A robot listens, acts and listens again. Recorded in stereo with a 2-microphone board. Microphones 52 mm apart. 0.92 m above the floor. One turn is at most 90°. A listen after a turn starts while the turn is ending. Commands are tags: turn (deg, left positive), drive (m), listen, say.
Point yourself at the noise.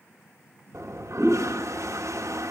<turn deg="-90"/>
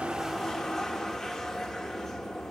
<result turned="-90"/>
<turn deg="10"/>
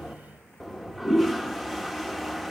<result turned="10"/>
<say>Found it: a toilet flushing, straight ahead.</say>